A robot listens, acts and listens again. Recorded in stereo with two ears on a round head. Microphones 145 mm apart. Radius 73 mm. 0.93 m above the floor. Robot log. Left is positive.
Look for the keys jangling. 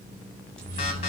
note: The keys jangling: about 45° right or 135° right.
cmd yaw -45
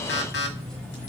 note: So it is at 10° left.
cmd yaw +10
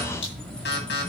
note: The keys jangling is now 10° left.
cmd yaw +10
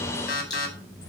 note: The keys jangling is now 20° left.
cmd yaw +20
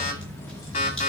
note: The keys jangling is now 20° left.
cmd yaw +20
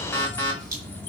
note: The keys jangling is now 10° left.
cmd yaw +10
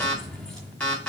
end: Found it: keys jangling, straight ahead.